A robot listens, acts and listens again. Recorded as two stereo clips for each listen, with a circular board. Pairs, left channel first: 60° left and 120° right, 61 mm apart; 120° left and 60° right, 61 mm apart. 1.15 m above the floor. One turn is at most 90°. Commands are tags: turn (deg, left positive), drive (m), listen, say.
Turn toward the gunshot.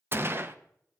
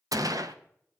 <turn deg="-70"/>
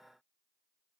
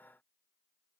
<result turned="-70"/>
<say>Facing where the gunshot came from. I can't hear it now.</say>